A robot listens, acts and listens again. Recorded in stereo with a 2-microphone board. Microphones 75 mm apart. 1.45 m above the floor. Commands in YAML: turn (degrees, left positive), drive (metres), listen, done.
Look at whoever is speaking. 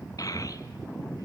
turn: 50
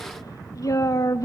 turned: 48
turn: 65
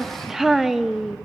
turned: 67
done: "Found it: a child speaking, straight ahead, 1 to 2 m away."